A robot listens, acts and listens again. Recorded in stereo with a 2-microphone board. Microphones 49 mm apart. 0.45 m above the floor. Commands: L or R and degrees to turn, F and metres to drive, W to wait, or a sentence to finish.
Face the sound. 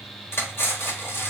L55
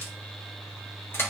L60
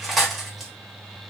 Facing the cutlery clinking.